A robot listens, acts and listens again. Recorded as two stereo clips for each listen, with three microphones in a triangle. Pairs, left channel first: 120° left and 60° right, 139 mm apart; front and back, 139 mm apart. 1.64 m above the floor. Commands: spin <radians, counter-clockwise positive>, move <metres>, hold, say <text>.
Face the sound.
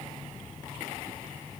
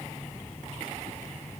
hold
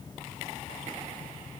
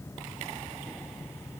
hold
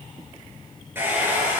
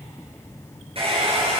spin -2.36
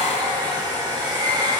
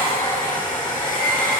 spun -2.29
say Facing the hair dryer, over 4 m away.